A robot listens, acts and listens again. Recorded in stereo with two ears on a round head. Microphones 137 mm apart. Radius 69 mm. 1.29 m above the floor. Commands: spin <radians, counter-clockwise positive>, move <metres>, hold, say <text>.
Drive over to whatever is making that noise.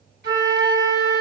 spin -1.22
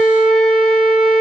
move 1.0
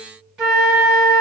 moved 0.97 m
move 1.0
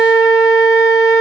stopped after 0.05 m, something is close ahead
say I am next to the flute.